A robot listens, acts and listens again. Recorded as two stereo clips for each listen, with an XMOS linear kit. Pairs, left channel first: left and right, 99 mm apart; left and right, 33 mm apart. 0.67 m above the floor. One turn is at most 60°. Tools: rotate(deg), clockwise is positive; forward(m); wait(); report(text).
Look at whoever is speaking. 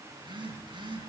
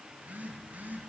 wait()
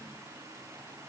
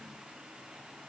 wait()
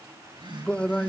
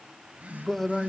rotate(-30)
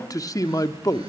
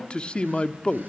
rotate(-60)
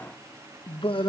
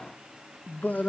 rotate(-60)
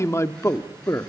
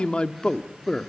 rotate(-35)
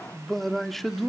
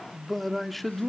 report("Found it: a man speaking, straight ahead, 1 to 2 m away.")